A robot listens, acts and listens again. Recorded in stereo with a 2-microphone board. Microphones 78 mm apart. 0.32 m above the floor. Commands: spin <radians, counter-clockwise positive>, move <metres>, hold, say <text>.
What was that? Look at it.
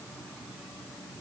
hold
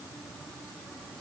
hold
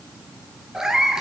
spin -0.52
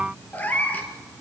spin 0.35
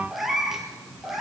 say Facing the cat meowing.